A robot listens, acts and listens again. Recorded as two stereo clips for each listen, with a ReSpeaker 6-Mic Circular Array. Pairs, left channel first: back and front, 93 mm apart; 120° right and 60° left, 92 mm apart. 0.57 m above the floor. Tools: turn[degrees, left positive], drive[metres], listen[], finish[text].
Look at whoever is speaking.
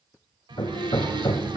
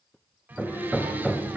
Thought: The child speaking: straight behind.
Action: turn[180]
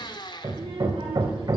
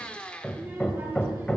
Thought: The child speaking is now 10° right.
Action: turn[-10]
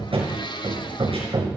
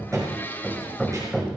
Action: listen[]
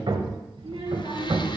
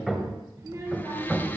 Action: finish[Found it: a child speaking, straight ahead, over 4 m away.]